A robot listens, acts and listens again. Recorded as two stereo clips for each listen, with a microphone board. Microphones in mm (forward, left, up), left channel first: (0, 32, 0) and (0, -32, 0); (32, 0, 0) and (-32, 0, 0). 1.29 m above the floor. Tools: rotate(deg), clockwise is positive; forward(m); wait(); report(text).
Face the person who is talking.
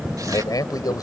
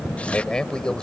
rotate(-75)
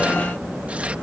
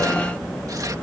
wait()
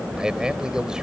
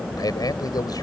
wait()
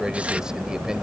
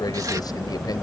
report("Facing where the man speaking came from. I can't hear it now.")